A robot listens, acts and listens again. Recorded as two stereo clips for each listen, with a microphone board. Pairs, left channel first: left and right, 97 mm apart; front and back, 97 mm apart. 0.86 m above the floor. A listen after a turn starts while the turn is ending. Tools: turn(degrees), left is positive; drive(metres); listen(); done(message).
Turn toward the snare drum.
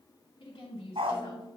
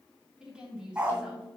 turn(degrees=65)
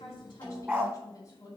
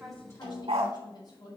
done("Facing the snare drum, 2 to 4 m away.")